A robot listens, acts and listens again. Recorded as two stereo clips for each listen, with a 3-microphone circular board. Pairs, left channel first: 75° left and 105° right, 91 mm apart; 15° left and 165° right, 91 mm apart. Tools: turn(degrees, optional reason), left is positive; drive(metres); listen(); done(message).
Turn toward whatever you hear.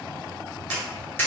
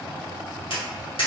turn(degrees=10, reason="The tapping: 10° left.")
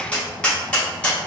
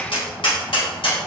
done("Found it: tapping, straight ahead.")